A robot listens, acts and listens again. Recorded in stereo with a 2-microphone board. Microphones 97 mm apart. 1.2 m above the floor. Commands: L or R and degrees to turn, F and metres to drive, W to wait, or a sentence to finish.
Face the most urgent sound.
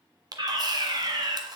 R55
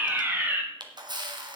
R25
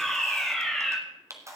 Found it: a fire alarm, straight ahead, 2 to 4 m away.